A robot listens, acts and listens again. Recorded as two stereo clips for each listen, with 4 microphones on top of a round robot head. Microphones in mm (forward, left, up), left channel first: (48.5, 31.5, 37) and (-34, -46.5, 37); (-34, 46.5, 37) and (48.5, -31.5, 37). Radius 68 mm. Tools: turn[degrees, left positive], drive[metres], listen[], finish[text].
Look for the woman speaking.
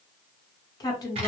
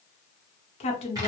Thought: The woman speaking: 105° left.
Action: turn[105]
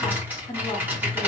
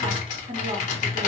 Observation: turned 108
Action: finish[Found it: a woman speaking, straight ahead.]